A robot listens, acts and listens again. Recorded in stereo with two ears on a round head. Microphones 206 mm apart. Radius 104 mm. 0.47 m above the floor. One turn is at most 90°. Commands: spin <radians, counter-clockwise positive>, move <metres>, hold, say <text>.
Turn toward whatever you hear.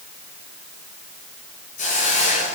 spin 0.61
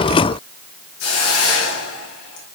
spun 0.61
spin 1.57
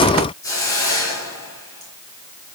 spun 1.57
spin 0.26
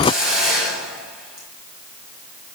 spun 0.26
say Facing the hiss.